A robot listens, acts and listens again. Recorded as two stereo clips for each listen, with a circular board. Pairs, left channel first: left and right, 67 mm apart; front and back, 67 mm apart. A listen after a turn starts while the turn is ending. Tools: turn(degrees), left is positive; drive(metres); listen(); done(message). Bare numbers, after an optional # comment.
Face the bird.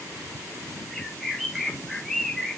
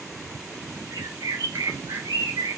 # The bird: 175° left.
turn(175)
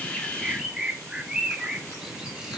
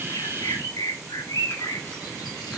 # The bird is now 15° right.
turn(-15)
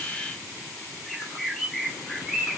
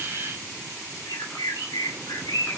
done("Found it: a bird, straight ahead, 1 to 2 m away.")